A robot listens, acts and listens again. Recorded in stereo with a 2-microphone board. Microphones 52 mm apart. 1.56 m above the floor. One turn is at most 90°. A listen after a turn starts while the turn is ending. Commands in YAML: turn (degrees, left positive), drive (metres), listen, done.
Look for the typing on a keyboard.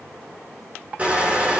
listen: true
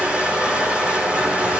listen: true
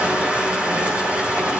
done: "I can't make out typing on a keyboard to turn to."